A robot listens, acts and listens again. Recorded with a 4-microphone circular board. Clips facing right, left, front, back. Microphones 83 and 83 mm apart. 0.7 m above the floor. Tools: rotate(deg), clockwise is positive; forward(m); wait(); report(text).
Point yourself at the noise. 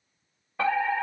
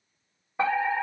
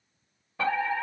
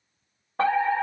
rotate(-160)
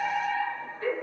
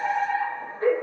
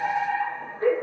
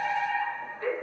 rotate(-45)
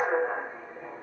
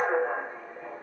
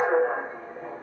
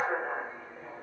rotate(10)
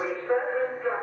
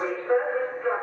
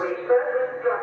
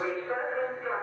report("Facing the fire alarm, 2 to 4 m away.")